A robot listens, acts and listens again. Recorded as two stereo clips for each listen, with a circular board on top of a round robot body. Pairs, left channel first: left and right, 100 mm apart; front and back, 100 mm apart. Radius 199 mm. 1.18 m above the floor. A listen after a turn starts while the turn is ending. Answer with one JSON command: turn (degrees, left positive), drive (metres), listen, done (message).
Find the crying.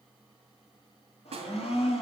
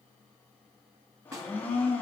{"listen": true}
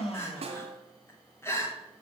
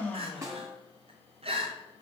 {"turn": 155}
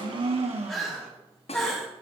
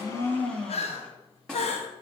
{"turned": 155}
{"done": "Found it: crying, straight ahead."}